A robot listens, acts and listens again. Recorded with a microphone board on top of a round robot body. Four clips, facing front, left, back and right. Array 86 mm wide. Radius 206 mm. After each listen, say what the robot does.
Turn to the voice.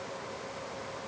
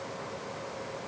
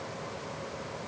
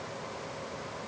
Keep listening.
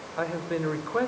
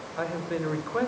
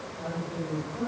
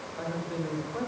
Turn 30° left.
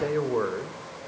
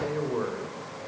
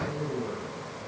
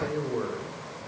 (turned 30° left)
Found it: a man speaking, straight ahead.